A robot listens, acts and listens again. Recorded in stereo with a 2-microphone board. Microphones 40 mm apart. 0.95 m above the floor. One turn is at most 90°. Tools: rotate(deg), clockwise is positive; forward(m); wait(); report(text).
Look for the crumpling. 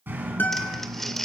rotate(-30)
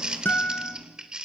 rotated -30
rotate(20)
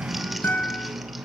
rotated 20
wait()
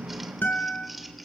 report("Found it: crumpling, straight ahead, 1 to 2 m away.")